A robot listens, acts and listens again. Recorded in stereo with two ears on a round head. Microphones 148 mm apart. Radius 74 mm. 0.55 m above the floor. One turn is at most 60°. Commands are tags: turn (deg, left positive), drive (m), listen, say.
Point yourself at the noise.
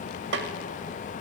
<turn deg="-60"/>
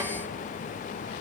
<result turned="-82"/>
<listen/>
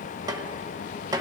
<turn deg="-25"/>
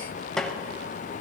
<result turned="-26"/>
<say>Facing the snare drum.</say>